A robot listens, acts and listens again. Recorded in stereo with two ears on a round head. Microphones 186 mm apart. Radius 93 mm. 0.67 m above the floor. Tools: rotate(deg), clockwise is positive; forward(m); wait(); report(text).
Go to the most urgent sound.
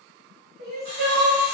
rotate(65)
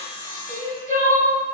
rotate(45)
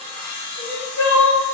forward(1.0)
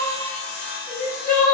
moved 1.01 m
forward(1.0)
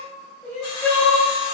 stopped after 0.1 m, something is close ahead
report("Arrived at the crying, straight ahead.")